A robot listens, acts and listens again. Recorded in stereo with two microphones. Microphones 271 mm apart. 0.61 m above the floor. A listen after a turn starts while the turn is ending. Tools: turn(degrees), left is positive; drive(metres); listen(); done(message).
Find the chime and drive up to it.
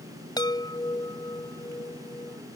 turn(degrees=30)
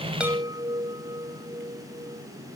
turn(degrees=-15)
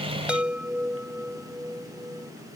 drive(metres=1.0)
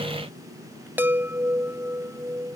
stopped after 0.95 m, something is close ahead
turn(degrees=-10)
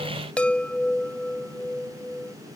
done("Something is in my way. I am facing the chime but have not reached it.")